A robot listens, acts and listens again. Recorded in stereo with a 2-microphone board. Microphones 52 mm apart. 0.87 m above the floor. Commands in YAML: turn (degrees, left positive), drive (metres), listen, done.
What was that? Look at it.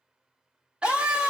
turn: -20
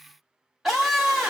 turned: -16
done: "Facing the scream."